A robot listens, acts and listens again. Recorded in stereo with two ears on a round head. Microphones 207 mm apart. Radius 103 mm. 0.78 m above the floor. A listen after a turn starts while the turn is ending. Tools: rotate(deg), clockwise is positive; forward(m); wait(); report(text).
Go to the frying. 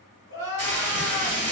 rotate(-30)
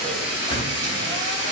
rotate(20)
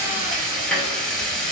forward(1.0)
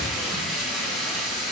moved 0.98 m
forward(1.0)
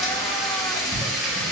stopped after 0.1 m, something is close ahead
report("Arrived at the frying, straight ahead.")